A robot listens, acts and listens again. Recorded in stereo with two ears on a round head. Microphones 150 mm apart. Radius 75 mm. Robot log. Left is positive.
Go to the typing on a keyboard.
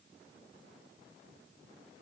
cmd idle
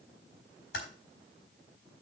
cmd yaw +90
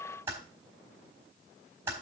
note: So it is at 15° right.
cmd yaw -15
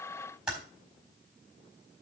cmd fwd 1.0
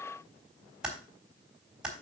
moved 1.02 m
cmd fwd 1.0
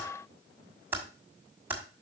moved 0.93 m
note: The typing on a keyboard is now 15° right.
cmd yaw -15
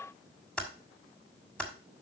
cmd fwd 1.0
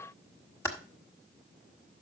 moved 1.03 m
note: The typing on a keyboard is now 20° left.
cmd yaw +20
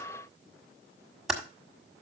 cmd fwd 1.0
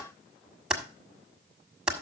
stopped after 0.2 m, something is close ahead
end: Arrived at the typing on a keyboard, straight ahead.